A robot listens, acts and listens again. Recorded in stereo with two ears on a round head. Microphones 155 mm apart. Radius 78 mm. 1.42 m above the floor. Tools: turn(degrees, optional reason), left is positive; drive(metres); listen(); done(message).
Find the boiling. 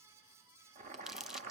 turn(degrees=-45, reason="The boiling: about 45° right or 135° right.")
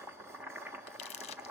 turn(degrees=-10, reason="So it is at 10° right.")
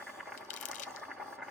done("Facing the boiling, 1 to 2 m away.")